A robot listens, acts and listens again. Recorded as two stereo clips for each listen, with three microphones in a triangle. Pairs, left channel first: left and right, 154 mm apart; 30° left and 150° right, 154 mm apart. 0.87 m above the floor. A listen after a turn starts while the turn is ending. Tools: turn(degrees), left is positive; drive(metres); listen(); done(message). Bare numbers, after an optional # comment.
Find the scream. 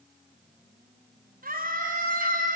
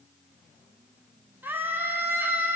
# The scream: 70° right.
turn(-70)
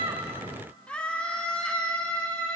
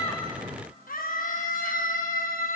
done("Found it: a scream, straight ahead.")